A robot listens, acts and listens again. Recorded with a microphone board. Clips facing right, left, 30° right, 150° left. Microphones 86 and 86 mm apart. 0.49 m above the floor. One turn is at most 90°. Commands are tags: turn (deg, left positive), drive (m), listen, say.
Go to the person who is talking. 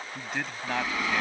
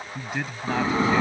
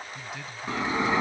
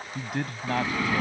<turn deg="90"/>
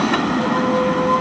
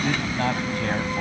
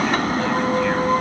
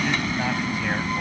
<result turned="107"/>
<turn deg="70"/>
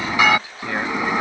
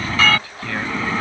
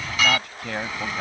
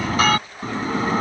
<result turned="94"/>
<turn deg="-25"/>
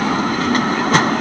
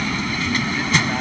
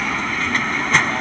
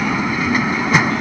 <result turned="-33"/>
<turn deg="10"/>
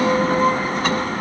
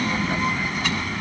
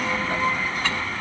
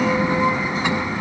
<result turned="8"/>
<say>I heard a man speaking from this way, but can't make it out now. I did not reach it.</say>